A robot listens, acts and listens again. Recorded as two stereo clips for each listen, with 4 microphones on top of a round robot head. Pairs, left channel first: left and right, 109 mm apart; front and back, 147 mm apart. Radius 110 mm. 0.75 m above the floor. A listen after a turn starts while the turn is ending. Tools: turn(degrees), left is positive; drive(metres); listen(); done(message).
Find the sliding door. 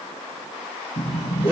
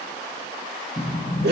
turn(degrees=55)
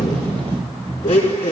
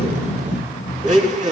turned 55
done("Facing the sliding door.")